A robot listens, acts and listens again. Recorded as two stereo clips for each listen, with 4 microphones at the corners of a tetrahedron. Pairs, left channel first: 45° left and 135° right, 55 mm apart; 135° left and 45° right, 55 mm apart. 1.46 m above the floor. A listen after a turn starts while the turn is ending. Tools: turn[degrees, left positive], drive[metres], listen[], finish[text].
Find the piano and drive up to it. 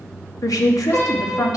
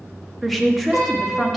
Thought: The piano: 15° left.
Action: turn[15]
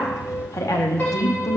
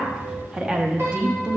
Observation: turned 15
Action: drive[1.0]
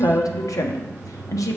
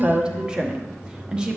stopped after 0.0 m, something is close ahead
Action: listen[]
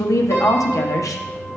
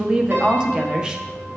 Action: finish[Something is in my way. I am facing the piano but have not reached it.]